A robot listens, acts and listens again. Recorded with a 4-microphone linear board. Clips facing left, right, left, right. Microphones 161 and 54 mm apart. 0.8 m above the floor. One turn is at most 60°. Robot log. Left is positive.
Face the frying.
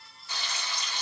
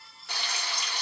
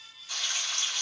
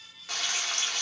cmd yaw -60
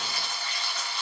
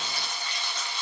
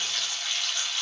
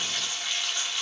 note: So it is at 20° right.
cmd yaw -20
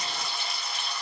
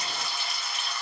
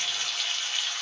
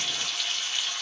end: Facing the frying.